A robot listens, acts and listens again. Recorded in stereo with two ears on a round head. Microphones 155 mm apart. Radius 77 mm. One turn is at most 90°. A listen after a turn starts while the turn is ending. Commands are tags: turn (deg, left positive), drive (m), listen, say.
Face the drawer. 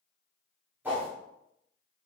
<listen/>
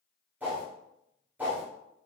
<listen/>
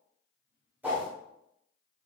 <say>I can't make out a drawer to turn to.</say>